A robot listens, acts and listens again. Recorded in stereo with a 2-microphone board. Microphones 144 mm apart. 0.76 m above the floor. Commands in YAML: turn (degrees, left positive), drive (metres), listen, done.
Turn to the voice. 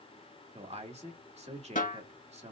turn: -50
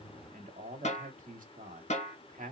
turn: -80
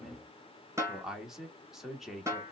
done: "Facing the man speaking, 1 to 2 m away."